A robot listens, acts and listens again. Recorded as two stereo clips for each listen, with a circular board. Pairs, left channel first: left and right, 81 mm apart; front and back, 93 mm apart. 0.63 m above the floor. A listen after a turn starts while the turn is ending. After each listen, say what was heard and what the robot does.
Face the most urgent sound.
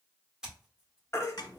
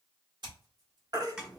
The baby crying: 140° left. Turn 140° left.
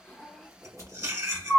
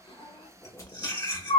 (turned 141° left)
Found it: a baby crying, straight ahead.